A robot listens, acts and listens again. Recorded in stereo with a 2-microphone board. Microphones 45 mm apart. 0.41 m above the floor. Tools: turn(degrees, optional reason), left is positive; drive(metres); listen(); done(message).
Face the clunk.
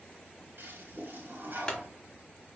turn(degrees=15, reason="The clunk: about 15° left or 165° left.")
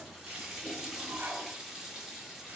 listen()
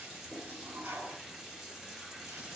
done("I heard a clunk, but can't make it out now. It was about straight ahead or 150° left.")